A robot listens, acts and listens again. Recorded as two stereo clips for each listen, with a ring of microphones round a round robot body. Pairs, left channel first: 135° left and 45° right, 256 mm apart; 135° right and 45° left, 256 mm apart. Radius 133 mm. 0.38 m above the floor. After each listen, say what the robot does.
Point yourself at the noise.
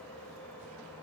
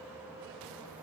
Keep listening.
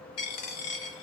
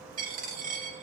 Turn 105° left.
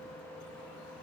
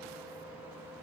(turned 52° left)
Turn 50° left.
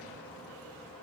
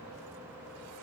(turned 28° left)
Turn 25° left.
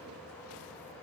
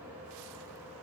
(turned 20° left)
Facing where the dropped coin came from. I can't hear it now.